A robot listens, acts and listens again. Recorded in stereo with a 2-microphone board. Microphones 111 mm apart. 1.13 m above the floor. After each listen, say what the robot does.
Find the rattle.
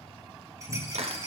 Turn 25° right.
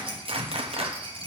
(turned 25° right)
Turn 125° right.
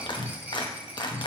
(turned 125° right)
Turn 15° right.
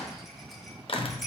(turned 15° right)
Facing the rattle, under 1 m away.